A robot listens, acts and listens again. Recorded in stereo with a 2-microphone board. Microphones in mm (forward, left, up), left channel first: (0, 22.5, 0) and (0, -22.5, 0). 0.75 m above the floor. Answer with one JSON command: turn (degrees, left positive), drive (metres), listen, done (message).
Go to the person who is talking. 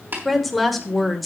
{"turn": 30}
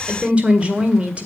{"turn": -25}
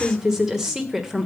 {"turn": -10}
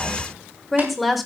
{"drive": 1.0}
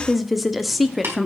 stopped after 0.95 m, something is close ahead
{"done": "Arrived at the woman speaking, straight ahead."}